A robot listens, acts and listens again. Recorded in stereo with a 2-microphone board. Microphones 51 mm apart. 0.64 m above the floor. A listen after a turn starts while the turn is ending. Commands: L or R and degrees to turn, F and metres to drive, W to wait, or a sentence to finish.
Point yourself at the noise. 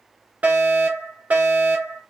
R35
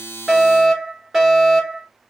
Found it: a fire alarm, straight ahead, 2 to 4 m away.